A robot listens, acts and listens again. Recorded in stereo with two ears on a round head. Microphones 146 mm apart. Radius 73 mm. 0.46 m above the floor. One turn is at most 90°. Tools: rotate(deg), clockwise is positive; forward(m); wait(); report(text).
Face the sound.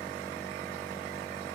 wait()
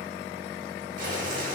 rotate(50)
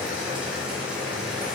report("Facing the boiling.")